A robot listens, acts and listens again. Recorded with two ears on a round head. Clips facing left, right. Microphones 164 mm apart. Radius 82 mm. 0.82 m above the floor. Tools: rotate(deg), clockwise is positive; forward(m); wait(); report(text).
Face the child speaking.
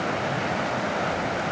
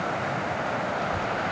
rotate(45)
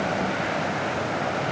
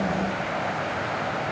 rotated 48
wait()
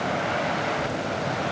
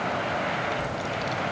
rotate(80)
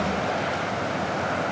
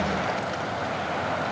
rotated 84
wait()
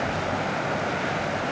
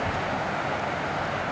rotate(30)
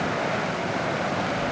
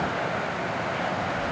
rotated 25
report("Found it: a child speaking, straight ahead.")